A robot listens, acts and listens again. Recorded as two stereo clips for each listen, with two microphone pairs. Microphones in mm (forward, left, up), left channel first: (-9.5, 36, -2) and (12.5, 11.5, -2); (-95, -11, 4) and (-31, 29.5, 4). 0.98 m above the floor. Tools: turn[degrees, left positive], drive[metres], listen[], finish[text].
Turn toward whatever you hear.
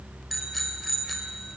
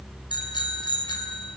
Thought: The bicycle bell: 140° right.
Action: turn[-140]
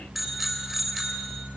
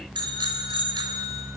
Thought: The bicycle bell is now 35° left.
Action: turn[35]
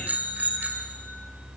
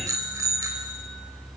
Thought: The bicycle bell is now 10° right.
Action: turn[-10]
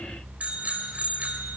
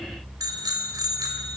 Action: finish[Facing the bicycle bell, 2 to 4 m away.]